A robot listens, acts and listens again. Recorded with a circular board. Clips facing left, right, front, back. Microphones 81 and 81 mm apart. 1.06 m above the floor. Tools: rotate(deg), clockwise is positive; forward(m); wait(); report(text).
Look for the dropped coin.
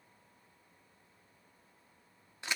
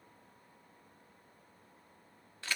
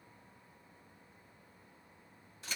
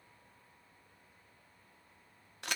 wait()
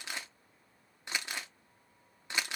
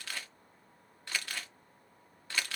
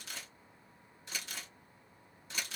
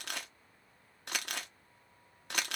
wait()
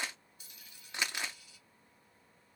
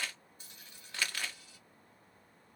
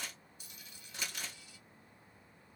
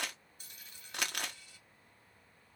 rotate(135)
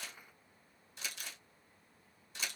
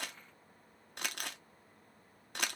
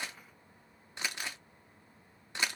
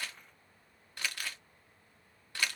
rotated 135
report("I heard a dropped coin from this way, but can't make it out now.")